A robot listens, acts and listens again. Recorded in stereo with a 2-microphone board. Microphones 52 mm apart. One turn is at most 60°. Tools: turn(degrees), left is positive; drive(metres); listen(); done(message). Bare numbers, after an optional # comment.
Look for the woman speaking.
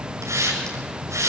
listen()
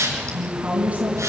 # The woman speaking: about 25° right or 155° right.
turn(-25)
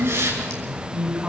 done("Found it: a woman speaking, straight ahead, over 4 m away.")